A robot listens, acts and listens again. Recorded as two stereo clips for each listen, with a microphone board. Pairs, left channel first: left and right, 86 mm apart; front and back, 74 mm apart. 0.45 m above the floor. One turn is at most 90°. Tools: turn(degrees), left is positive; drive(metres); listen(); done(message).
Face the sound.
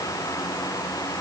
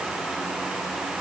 listen()
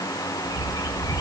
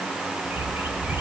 turn(degrees=90)
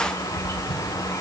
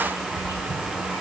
turn(degrees=30)
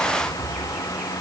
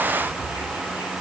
done("Found it: a bird, straight ahead, 2 to 4 m away.")